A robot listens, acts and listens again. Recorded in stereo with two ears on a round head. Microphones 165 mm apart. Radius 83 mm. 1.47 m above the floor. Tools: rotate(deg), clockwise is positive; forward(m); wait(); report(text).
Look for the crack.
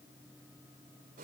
wait()
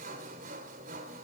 wait()
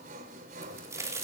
rotate(15)
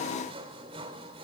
wait()
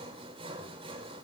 report("I heard a crack, but can't make it out now. It was about straight ahead or 150° right.")